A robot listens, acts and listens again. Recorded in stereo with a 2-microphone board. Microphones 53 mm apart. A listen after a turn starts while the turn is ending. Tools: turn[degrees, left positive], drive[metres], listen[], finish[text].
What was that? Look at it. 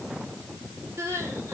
Thought: The crying: about 55° right or 125° right.
Action: turn[-55]
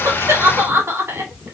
Thought: So it is at 65° right.
Action: turn[-65]
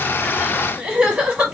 Thought: The crying is now 25° right.
Action: turn[-25]
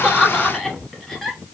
Action: finish[Found it: crying, straight ahead.]